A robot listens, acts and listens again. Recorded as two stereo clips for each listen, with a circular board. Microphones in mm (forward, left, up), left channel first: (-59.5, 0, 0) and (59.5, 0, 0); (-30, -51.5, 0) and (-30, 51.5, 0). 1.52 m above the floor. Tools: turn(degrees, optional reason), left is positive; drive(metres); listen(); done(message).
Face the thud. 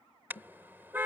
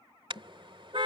turn(degrees=-140, reason="The thud: 140° right.")
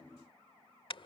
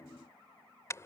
done("I heard a thud from this way, but can't make it out now.")